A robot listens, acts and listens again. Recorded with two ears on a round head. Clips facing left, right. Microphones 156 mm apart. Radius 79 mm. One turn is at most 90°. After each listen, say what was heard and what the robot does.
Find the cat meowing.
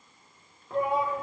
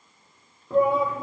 Keep listening.
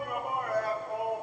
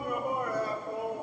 Keep listening.
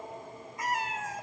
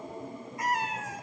The cat meowing: about 70° left or 110° left. Turn 70° left.
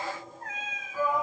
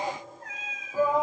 So it is at 45° left. Turn 45° left.
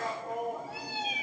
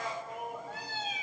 The cat meowing is now 15° left. Turn 15° left.
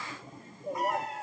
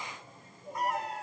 Facing the cat meowing, 2 to 4 m away.